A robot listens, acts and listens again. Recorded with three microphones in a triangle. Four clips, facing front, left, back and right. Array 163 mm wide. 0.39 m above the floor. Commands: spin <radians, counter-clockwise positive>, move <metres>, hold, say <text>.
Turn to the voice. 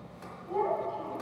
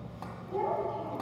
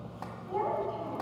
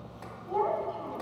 spin -1.57
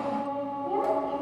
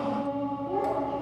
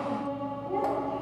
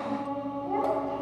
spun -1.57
spin -0.70
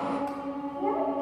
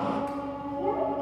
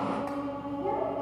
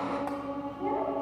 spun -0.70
spin 0.17
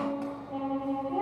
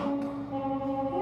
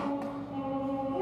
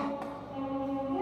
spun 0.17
hold
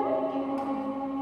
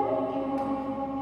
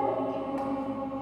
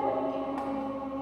say Found it: a child speaking, straight ahead.